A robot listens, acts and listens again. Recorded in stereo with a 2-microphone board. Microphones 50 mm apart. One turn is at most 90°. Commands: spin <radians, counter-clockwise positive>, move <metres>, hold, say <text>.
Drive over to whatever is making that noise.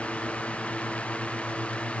hold
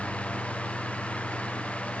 hold
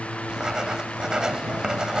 spin -0.52
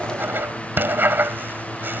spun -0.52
spin -1.57
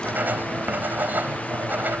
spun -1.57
spin -0.79
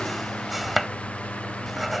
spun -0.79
move 1.0
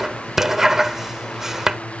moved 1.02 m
spin -0.17
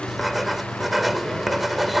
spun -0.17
move 1.0
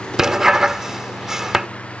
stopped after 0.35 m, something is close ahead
spin -0.26
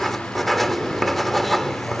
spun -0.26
say I am next to the writing.